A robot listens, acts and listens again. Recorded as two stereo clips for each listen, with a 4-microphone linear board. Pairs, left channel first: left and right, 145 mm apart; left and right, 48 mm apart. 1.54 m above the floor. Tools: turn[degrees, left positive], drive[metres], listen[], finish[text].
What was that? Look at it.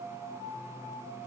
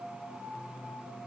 Action: listen[]
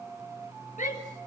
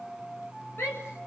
Thought: The shout: about 60° left or 120° left.
Action: turn[60]
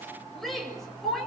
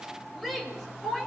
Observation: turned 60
Action: finish[Found it: a shout, straight ahead.]